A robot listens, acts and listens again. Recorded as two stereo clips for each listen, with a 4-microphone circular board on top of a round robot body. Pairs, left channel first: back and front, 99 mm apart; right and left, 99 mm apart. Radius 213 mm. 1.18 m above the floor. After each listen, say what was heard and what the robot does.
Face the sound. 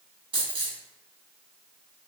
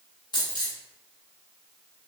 The dropped coin: 40° right. Turn 40° right.
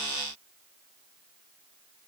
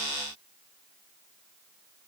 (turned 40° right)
I heard a dropped coin from this way, but can't make it out now.